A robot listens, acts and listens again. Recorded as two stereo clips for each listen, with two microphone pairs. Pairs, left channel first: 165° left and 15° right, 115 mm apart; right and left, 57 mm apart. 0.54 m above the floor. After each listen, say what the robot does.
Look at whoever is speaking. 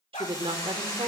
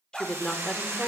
Turn 20° right.
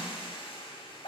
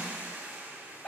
Keep listening.
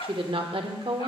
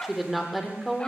Facing the woman speaking, 1 to 2 m away.